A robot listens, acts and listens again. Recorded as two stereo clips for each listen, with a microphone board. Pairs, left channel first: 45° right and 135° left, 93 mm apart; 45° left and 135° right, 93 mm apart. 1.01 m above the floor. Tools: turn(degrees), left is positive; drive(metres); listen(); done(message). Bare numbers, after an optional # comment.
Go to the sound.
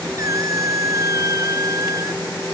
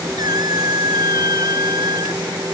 # The squeak: 175° right.
turn(-175)
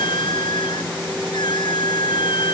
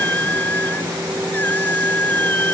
# The squeak is now 25° right.
turn(-25)
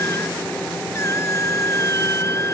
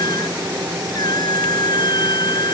# The squeak is now 10° left.
turn(10)
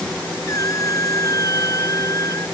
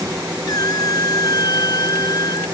drive(1.0)
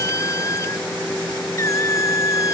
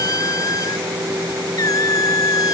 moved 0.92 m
drive(1.0)
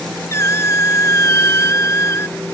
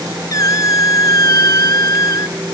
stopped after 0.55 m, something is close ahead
done("I am next to the squeak.")